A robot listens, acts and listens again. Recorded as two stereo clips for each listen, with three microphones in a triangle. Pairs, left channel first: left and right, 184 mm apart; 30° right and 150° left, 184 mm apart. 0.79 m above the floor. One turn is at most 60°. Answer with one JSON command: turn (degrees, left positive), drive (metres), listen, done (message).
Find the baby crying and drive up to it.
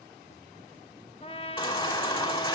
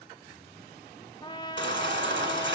{"turn": 60}
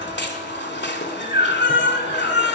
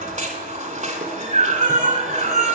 {"turn": 60}
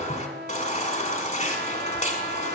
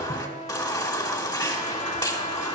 {"turn": 40}
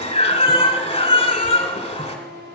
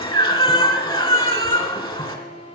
{"turn": 30}
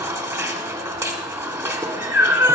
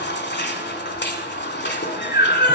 {"turn": -15}
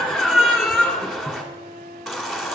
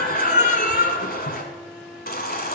{"drive": 1.0}
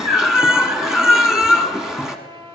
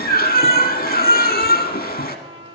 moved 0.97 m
{"drive": 1.0}
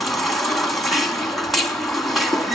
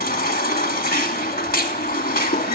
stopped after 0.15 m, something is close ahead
{"done": "Arrived at the baby crying, straight ahead."}